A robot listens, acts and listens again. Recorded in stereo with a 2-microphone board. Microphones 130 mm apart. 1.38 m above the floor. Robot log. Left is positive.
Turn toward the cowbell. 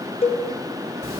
note: The cowbell: about 50° left or 130° left.
cmd yaw +50
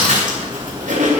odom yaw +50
cmd idle
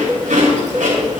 end: Found it: a cowbell, straight ahead.